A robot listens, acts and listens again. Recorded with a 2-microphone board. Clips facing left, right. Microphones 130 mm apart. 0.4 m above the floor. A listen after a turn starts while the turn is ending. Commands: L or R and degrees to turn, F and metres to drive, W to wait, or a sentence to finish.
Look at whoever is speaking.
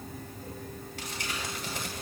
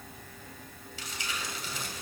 W
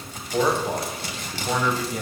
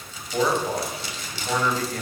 L30
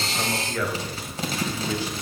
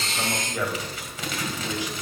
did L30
R20
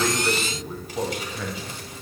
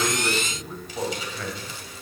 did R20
Facing the man speaking, 2 to 4 m away.